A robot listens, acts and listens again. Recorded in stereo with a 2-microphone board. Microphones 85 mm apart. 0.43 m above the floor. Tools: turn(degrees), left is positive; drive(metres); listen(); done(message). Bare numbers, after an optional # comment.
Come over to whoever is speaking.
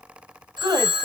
# The woman speaking: about 50° right or 130° right.
turn(-50)
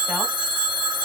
listen()
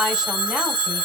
listen()
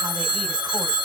done("I heard a woman speaking, but can't make it out now. It was about straight ahead or 80° right. I did not reach it.")